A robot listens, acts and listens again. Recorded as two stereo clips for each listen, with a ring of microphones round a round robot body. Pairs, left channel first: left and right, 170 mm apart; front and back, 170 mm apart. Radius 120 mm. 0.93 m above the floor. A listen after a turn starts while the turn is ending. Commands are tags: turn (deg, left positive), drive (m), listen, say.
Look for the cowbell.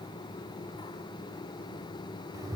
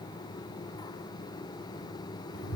<listen/>
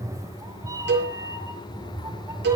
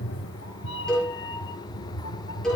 <turn deg="-90"/>
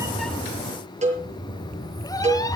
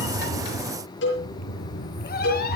<turn deg="-45"/>
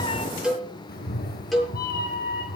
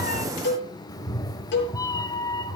<say>Facing the cowbell, over 4 m away.</say>